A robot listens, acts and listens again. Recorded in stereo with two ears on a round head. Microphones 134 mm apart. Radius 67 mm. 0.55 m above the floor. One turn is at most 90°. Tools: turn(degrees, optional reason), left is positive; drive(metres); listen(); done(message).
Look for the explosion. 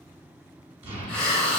turn(degrees=-40, reason="The explosion: about 40° right or 140° right.")
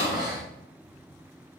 listen()
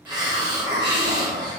done("I heard an explosion, but can't make it out now. It was about straight ahead or 100° right.")